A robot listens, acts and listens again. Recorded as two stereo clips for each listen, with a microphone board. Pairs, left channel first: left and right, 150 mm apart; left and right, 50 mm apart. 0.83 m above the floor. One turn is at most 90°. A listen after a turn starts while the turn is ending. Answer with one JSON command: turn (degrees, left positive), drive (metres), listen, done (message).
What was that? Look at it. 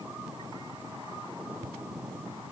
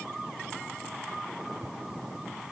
{"listen": true}
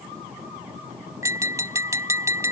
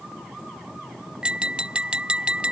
{"turn": -20}
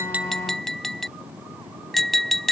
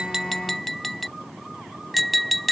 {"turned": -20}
{"done": "Found it: tapping, straight ahead."}